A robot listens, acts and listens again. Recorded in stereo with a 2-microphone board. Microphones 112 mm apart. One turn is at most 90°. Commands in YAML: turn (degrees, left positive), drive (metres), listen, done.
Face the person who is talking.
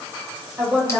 turn: -20
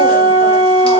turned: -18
listen: true
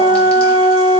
listen: true
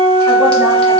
done: "I heard a woman speaking, but can't make it out now. It was about straight ahead or 145° right."